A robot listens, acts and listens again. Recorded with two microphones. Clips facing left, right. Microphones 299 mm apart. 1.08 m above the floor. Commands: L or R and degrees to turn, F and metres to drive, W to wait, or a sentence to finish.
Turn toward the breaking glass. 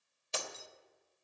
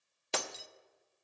R70
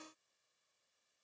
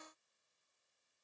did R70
W
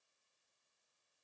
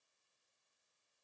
I heard breaking glass, but can't make it out now. It was about straight ahead or 40° right.